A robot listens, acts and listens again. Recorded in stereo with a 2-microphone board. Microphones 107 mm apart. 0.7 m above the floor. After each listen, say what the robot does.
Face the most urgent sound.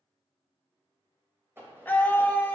Turn 15° left.
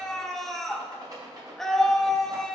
Found it: a scream, straight ahead.